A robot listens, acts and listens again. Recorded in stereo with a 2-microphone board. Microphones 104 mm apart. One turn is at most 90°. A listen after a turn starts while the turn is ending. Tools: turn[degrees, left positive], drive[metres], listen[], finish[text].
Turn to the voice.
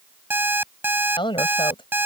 Thought: The woman speaking: about 55° left or 125° left.
Action: turn[55]
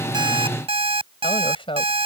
Thought: So it is at 65° left.
Action: turn[65]
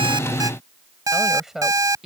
Action: finish[Found it: a woman speaking, straight ahead.]